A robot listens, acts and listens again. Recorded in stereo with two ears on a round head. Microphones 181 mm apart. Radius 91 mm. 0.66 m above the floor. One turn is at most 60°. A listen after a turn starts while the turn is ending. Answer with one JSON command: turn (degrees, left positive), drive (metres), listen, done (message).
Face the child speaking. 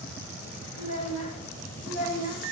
{"turn": 35}
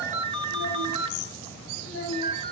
{"turn": 60}
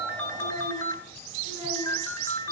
{"turn": 60}
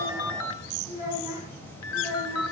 {"turn": -15}
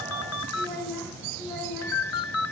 {"turn": -10}
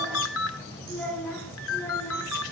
{"done": "Facing the child speaking."}